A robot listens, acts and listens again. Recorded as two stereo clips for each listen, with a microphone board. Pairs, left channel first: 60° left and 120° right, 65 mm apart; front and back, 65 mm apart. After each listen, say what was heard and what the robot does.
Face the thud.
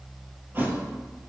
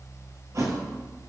The thud: 170° right. Turn 170° right.
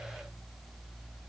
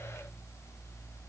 Facing where the thud came from. I can't hear it now.